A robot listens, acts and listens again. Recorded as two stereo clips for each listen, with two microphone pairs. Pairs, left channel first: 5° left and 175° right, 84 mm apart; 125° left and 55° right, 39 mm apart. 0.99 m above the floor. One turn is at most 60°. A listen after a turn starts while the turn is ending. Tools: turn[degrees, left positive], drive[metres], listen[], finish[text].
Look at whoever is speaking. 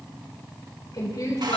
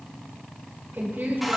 Thought: The woman speaking: 30° right.
Action: turn[-30]
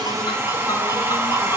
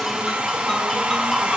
Action: listen[]
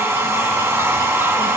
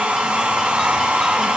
Action: listen[]
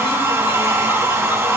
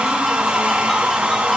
Action: finish[I heard a woman speaking from this way, but can't make it out now.]